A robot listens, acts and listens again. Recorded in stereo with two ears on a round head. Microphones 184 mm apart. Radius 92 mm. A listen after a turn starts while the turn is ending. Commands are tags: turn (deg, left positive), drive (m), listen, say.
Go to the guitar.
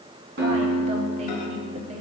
<turn deg="-60"/>
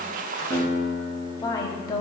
<turn deg="-60"/>
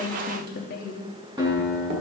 <turn deg="-20"/>
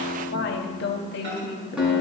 <drive m="1.0"/>
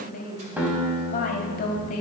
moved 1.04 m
<turn deg="-10"/>
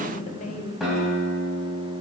<drive m="1.0"/>
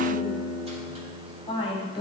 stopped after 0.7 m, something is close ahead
<say>Arrived at the guitar, straight ahead.</say>